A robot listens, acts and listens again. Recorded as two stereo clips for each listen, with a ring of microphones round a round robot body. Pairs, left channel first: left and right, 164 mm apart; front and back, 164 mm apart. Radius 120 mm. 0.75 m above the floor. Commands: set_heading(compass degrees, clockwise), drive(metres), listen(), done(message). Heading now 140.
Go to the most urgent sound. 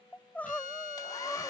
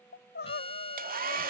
set_heading(130)
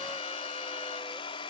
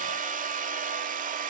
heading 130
listen()
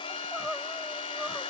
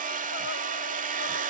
listen()
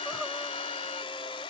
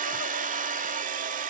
done("Facing where the crying came from. I can't hear it now. I did not reach it.")